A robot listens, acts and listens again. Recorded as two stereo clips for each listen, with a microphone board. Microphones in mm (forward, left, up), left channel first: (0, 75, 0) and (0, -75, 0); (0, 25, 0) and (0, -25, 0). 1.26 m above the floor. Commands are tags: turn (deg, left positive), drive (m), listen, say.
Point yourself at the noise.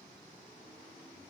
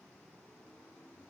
<listen/>
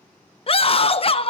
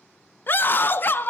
<turn deg="40"/>
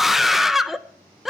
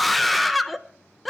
<say>Found it: a scream, straight ahead, under 1 m away.</say>